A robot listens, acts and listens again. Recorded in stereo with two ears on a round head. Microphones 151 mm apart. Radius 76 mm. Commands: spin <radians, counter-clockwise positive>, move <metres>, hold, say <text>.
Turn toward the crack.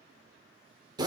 hold
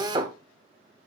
hold
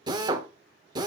say I can't make out a crack to turn to.